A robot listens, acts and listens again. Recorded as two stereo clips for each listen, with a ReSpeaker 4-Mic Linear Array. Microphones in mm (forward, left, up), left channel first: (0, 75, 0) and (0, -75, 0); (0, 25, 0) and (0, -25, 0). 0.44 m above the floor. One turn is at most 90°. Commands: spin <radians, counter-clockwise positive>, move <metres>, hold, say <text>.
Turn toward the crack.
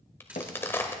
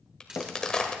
spin 0.26
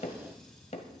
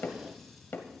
hold
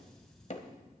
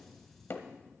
say I heard a crack, but can't make it out now. It was about straight ahead or 150° left.